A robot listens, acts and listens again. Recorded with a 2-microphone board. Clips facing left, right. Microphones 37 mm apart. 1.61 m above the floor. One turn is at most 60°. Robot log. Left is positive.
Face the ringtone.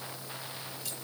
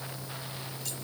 cmd idle
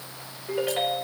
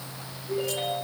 note: The ringtone: about 60° left or 120° left.
cmd yaw +60
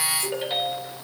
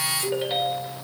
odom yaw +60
end: Found it: a ringtone, straight ahead, over 4 m away.